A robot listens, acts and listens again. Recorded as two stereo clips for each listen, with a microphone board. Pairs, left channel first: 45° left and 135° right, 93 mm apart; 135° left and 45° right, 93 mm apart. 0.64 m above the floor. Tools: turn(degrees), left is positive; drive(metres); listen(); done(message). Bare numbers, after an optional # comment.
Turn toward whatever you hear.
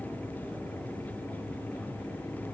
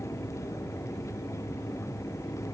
listen()
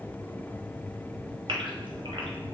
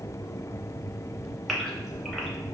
# The gasp: 135° right.
turn(-135)
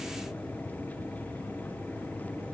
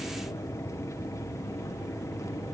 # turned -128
# Nothing new. It was at 10° right.
turn(-10)
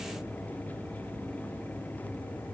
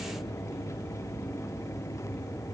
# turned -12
done("I heard a gasp from this way, but can't make it out now.")